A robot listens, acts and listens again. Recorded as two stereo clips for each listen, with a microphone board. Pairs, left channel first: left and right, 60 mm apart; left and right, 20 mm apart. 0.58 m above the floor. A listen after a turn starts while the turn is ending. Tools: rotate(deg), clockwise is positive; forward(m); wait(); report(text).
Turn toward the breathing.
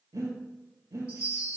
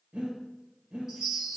rotate(90)
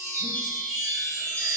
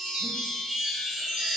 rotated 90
wait()
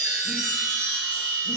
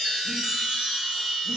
wait()
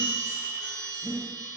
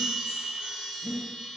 report("Found it: breathing, straight ahead.")